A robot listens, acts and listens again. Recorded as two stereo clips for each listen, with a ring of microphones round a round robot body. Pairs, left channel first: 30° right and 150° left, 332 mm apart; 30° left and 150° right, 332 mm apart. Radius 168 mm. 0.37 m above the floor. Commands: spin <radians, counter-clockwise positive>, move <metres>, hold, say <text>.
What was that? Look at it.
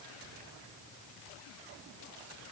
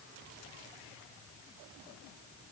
hold
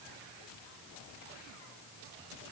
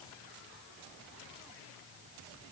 hold
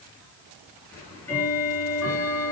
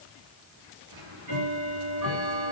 spin -2.01
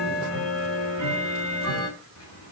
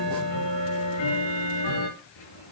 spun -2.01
spin 0.35
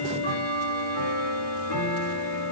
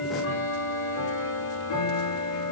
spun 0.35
say Facing the ticking, over 4 m away.